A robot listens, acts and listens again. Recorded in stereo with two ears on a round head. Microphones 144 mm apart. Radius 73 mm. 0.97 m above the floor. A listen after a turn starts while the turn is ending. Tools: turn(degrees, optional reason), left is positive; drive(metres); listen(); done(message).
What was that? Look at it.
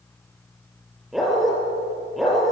turn(degrees=30)
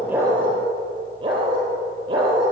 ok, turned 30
turn(degrees=-30, reason="So it is at 30° right.")
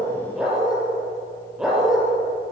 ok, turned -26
done("Facing the dog barking.")